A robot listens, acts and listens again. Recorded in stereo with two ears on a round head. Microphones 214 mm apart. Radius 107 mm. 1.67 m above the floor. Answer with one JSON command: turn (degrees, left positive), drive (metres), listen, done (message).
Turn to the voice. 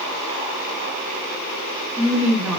{"turn": -30}
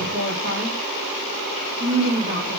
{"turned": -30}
{"turn": -145}
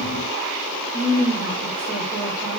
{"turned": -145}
{"turn": -15}
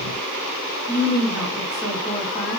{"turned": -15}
{"done": "Found it: a woman speaking, straight ahead."}